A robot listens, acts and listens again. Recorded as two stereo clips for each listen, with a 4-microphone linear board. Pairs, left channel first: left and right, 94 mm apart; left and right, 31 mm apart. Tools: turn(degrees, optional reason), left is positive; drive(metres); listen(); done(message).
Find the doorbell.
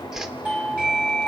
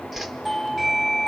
turn(degrees=-30)
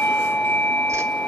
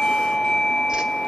turn(degrees=15, reason="So it is at 15° left.")
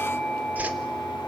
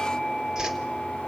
done("Found it: a doorbell, straight ahead, 2 to 4 m away.")